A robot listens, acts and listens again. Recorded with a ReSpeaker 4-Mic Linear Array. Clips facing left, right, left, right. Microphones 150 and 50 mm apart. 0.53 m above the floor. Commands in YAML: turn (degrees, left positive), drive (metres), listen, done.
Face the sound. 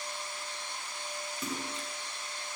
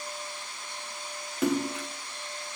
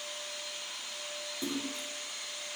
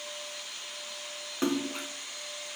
turn: -70
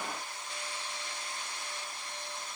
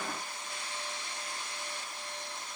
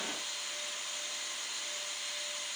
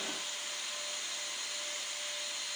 listen: true
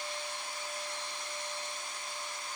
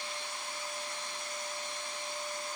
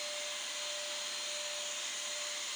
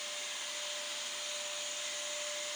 done: "I heard a splash, but can't make it out now. It was about straight ahead or 40° right."